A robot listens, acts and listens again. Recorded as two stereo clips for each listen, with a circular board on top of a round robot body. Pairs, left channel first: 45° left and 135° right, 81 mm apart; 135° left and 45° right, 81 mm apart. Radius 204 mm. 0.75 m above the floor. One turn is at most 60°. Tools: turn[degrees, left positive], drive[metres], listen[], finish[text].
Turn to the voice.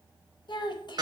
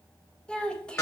Thought: The child speaking: 55° left.
Action: turn[55]
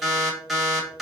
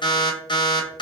Action: listen[]
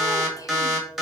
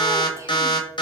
Action: listen[]
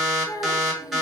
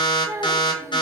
Action: finish[Facing the child speaking.]